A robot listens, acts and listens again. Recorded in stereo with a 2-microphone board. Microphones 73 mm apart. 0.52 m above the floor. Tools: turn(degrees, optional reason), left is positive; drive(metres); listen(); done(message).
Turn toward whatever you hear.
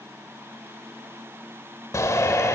turn(degrees=45, reason="The shout: about 45° left or 135° left.")
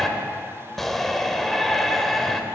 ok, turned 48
done("Facing the shout.")